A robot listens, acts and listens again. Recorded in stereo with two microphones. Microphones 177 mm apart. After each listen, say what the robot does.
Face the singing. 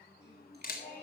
Turn 75° left.
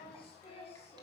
Turn 35° left.
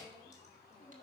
Turn 20° left.
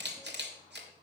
Keep listening.
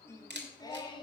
Turn 25° left.
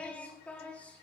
Found it: singing, straight ahead.